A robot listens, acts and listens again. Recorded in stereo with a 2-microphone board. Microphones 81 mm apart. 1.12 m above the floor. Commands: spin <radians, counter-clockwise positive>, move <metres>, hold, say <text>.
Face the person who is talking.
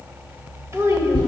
spin -0.61
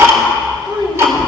spin -1.92
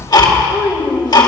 spin -0.35
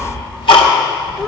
hold
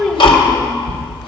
say Found it: a child speaking, straight ahead.